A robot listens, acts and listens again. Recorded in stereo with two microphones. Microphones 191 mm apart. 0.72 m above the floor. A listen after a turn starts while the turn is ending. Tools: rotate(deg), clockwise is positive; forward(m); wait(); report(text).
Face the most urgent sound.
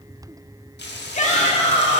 rotate(-40)
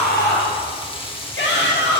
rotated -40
rotate(-100)
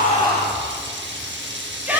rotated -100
rotate(10)
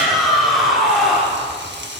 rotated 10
report("Found it: a shout, straight ahead.")